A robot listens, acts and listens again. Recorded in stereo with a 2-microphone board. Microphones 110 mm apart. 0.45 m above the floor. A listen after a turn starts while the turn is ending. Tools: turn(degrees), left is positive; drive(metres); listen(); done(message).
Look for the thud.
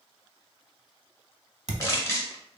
turn(degrees=-90)
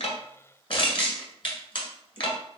done("I heard a thud from this way, but can't make it out now.")